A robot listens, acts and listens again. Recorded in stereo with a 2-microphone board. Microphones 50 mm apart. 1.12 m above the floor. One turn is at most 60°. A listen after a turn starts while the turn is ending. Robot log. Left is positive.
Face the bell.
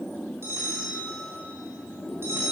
note: The bell: about 75° right or 105° right.
cmd yaw -60
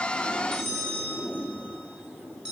note: So it is at 10° right.
cmd yaw -10
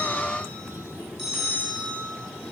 end: Found it: a bell, straight ahead, 2 to 4 m away.